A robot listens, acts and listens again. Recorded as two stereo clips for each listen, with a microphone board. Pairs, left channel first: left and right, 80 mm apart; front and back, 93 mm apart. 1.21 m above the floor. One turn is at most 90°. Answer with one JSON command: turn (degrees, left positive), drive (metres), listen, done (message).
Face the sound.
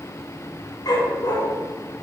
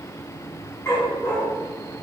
{"turn": 60}
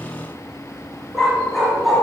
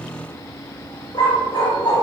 {"done": "Found it: a dog barking, straight ahead."}